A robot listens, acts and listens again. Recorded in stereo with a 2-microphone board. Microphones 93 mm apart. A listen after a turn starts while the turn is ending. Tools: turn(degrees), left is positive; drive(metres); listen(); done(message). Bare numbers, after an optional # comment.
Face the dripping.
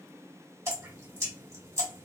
# The dripping: about 30° right or 150° right.
turn(-30)
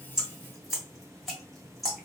done("Found it: dripping, straight ahead.")